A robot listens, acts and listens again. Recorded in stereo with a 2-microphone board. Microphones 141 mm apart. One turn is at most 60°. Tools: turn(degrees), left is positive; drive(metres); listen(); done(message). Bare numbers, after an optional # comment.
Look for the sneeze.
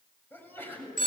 turn(30)
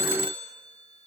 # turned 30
listen()
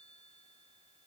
done("I heard a sneeze, but can't make it out now. It was about 15° right or 135° left.")